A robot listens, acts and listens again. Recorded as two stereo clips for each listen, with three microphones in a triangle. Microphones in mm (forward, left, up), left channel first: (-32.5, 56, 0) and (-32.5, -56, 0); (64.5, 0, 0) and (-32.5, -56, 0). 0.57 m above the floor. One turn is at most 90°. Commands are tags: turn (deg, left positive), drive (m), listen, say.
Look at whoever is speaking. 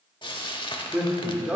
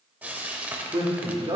<turn deg="-90"/>
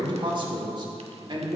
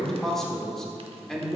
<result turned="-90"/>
<turn deg="-55"/>
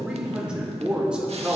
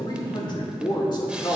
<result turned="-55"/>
<turn deg="-10"/>
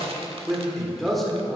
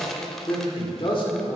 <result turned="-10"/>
<say>Facing the man speaking, 1 to 2 m away.</say>